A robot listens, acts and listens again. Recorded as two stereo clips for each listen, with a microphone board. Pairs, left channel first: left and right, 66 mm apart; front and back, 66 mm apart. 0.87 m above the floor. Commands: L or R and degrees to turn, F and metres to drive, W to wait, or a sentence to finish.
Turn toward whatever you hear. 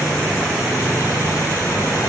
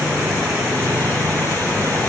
W
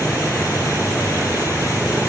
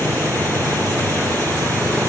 W
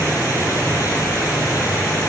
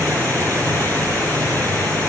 I can't make out anything to turn to.